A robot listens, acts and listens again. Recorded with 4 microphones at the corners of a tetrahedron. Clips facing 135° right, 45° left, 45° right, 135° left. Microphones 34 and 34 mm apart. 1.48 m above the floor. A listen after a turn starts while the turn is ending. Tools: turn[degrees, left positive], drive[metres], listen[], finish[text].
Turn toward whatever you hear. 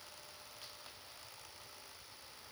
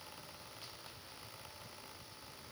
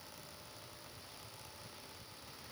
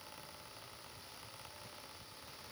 Action: listen[]
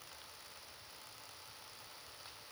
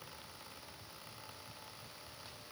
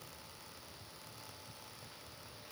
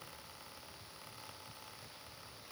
Action: listen[]
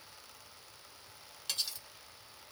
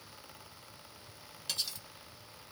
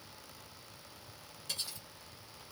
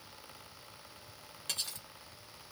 Thought: The cutlery clinking: 140° left.
Action: turn[140]
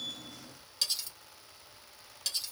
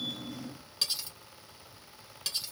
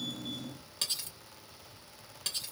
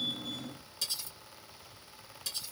Thought: The cutlery clinking is now 30° right.
Action: turn[-30]
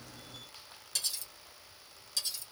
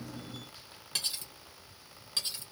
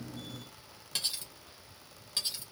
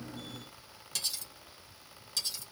Action: finish[Facing the cutlery clinking, 1 to 2 m away.]